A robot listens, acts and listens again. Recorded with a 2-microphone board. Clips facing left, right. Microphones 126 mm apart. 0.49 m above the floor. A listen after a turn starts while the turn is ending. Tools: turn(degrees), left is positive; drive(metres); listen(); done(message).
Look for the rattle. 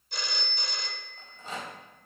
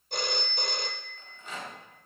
turn(degrees=35)
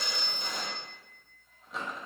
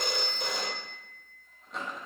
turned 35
done("Found it: a rattle, straight ahead.")